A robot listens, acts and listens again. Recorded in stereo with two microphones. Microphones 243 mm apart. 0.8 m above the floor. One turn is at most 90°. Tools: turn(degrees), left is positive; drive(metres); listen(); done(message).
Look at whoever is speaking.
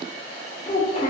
turn(degrees=30)
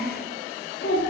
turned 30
turn(degrees=90)
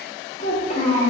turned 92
turn(degrees=30)
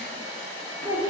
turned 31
done("Found it: a child speaking, straight ahead.")